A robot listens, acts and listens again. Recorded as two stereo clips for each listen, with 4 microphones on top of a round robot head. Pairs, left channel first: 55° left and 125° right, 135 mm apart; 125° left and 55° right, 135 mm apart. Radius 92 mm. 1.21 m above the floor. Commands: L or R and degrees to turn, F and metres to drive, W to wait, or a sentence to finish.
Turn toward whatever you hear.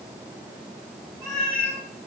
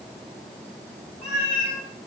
L130
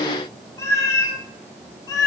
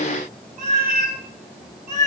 R10
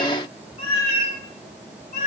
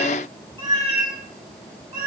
L10
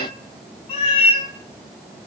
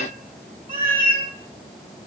Found it: a cat meowing, straight ahead.